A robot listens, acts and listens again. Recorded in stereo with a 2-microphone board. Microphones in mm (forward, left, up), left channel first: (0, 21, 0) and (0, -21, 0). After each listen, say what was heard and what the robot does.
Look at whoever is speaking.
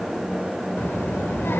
Turn 90° left.
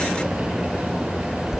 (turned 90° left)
So it is at 10° right. Turn 10° right.
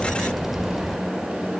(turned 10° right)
Facing the child speaking, 1 to 2 m away.